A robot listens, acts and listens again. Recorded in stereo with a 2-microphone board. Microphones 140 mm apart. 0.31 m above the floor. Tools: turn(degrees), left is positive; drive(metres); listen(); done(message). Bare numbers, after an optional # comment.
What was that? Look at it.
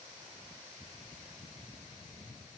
listen()
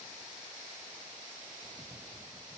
listen()
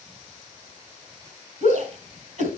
# The shout: about 60° right or 120° right.
turn(-60)
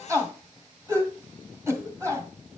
# So it is at 20° right.
turn(-20)
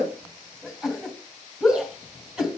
done("Facing the shout, 2 to 4 m away.")